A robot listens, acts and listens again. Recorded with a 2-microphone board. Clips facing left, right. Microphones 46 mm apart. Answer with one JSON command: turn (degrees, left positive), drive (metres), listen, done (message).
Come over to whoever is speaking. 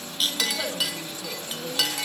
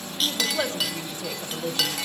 {"turn": -50}
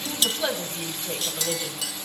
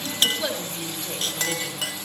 {"drive": 1.0}
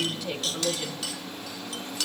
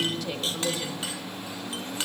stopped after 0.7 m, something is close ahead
{"done": "Blocked. The woman speaking is further on, straight ahead."}